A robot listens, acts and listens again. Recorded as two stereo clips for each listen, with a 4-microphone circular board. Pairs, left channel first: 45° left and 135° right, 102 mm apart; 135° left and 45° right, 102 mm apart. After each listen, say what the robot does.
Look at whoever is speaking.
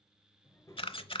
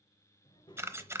Turn 100° left.
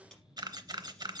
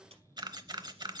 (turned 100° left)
Found it: a child speaking, straight ahead.